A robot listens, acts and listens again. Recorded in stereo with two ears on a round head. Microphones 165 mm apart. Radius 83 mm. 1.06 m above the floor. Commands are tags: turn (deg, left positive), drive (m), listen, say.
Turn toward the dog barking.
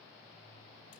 <listen/>
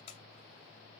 <listen/>
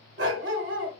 <turn deg="-70"/>
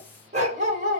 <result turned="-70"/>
<turn deg="-40"/>
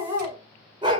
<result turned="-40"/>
<turn deg="-25"/>
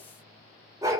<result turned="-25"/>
<turn deg="-15"/>
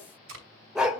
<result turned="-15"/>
<say>Found it: a dog barking, straight ahead.</say>